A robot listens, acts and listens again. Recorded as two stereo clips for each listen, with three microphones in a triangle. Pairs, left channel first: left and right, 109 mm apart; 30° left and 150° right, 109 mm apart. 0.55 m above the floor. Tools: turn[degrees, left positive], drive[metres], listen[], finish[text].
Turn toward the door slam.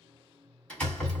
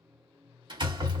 Thought: The door slam: 170° left.
Action: turn[170]
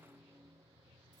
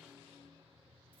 Action: finish[Facing where the door slam came from. I can't hear it now.]